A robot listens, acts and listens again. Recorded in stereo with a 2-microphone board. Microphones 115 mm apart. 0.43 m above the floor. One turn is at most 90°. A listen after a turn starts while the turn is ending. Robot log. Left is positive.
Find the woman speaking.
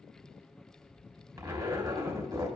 cmd idle
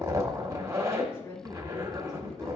note: The woman speaking: about 25° left or 155° left.
cmd yaw +25
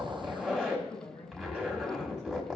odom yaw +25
note: The woman speaking: about 20° left or 160° left.
cmd yaw +20
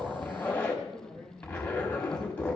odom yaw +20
cmd yaw +30
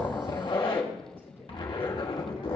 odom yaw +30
cmd idle
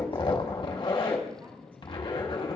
cmd idle
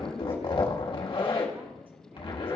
end: I heard a woman speaking, but can't make it out now. It was about 20° right or 140° left.